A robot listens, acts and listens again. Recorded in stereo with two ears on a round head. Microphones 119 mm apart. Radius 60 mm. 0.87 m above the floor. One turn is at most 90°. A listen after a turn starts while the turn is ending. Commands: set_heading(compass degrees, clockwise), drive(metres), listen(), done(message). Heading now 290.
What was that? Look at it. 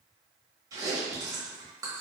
set_heading(320)
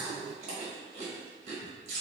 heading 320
set_heading(50)
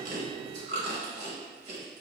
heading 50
set_heading(105)
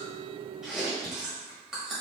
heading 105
done("Facing the chewing.")